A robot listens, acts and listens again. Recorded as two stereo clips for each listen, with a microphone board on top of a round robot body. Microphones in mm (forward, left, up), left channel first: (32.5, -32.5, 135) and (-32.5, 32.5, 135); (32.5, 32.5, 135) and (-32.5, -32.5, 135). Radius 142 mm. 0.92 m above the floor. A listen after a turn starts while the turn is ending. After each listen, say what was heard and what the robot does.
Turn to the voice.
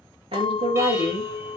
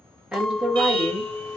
The woman speaking: 145° left. Turn 145° left.
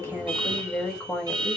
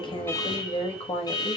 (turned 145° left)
The woman speaking is now 35° left. Turn 35° left.
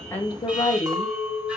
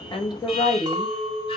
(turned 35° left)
Facing the woman speaking.